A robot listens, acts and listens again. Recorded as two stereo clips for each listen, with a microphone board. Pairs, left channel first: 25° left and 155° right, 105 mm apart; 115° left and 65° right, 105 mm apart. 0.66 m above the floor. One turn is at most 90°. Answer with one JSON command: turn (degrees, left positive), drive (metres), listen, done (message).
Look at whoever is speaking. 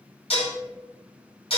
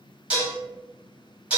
{"listen": true}
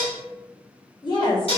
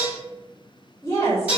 {"turn": 55}
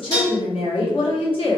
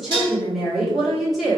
{"turn": 20}
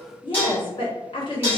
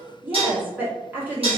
{"done": "Found it: a woman speaking, straight ahead, 1 to 2 m away."}